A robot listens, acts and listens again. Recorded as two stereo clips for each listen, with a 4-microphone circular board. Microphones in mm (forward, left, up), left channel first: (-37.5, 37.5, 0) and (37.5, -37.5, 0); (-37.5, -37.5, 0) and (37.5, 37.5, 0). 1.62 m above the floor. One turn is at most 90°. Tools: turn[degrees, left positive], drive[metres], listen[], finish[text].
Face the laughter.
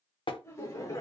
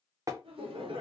Thought: The laughter: 75° left.
Action: turn[75]
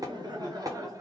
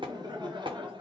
Thought: The laughter is now 10° left.
Action: turn[10]
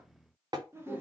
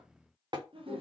Thought: The laughter is now 25° left.
Action: turn[25]
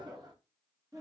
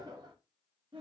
Thought: The laughter is now 10° left.
Action: turn[10]
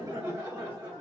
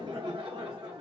Action: finish[Found it: laughter, straight ahead.]